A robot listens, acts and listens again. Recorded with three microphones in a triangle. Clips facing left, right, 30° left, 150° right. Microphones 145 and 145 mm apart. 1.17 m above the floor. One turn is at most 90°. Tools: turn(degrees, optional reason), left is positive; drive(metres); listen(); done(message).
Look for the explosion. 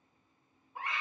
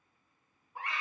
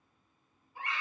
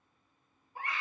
listen()
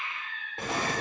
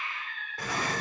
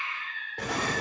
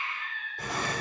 turn(degrees=25, reason="The explosion: 25° left.")
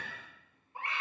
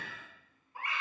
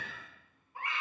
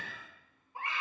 done("Facing where the explosion came from. I can't hear it now.")